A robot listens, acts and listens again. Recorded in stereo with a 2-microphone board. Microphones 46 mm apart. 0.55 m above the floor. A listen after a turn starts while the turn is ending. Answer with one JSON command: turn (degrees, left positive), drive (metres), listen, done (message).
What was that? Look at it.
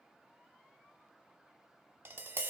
{"turn": -55}
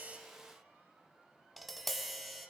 {"done": "Found it: tapping, straight ahead."}